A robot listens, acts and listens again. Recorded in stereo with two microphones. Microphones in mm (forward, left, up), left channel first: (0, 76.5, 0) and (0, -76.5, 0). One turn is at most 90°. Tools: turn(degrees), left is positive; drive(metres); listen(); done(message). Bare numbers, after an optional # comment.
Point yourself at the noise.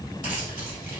# The keys jangling: about 60° left or 120° left.
turn(60)
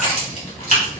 # So it is at 65° left.
turn(65)
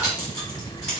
# The keys jangling is now 25° left.
turn(25)
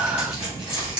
done("Found it: keys jangling, straight ahead.")